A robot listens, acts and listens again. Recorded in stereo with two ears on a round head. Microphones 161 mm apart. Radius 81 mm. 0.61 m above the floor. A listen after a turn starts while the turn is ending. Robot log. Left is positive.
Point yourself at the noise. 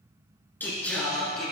cmd yaw +30
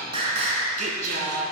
note: So it is at 55° right.
cmd yaw -55
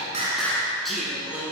note: The singing is now 10° right.
cmd yaw -10
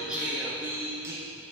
note: The singing is now 15° right.
cmd yaw -15
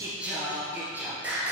note: The singing is now 10° right.
cmd yaw -10
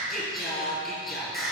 end: Found it: singing, straight ahead.